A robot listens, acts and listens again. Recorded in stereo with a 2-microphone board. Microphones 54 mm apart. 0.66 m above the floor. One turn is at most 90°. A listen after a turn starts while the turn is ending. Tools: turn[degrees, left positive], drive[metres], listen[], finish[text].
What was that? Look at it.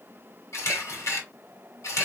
Thought: The camera shutter: about 65° left or 115° left.
Action: turn[65]
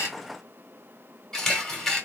Thought: So it is at 10° left.
Action: turn[10]
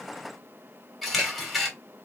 Action: finish[Found it: a camera shutter, straight ahead.]